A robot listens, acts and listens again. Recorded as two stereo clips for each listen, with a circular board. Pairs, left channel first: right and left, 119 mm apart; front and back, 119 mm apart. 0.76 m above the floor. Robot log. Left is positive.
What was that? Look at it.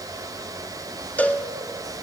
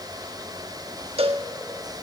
note: The cowbell: 165° right.
cmd yaw -165
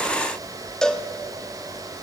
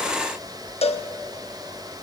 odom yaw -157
end: Facing the cowbell.